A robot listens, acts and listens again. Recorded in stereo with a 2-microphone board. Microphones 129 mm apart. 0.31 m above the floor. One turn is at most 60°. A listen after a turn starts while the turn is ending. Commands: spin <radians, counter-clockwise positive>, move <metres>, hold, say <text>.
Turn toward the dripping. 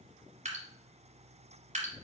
spin -1.05
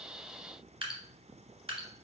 spin -0.87
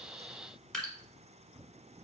say Found it: dripping, straight ahead.